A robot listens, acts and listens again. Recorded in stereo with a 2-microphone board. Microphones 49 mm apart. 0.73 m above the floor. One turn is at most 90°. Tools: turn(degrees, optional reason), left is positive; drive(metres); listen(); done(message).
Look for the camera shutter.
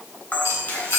turn(degrees=35, reason="The camera shutter: about 35° left or 145° left.")
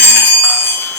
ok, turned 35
listen()
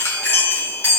listen()
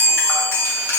done("I heard a camera shutter, but can't make it out now. It was about straight ahead or 110° left.")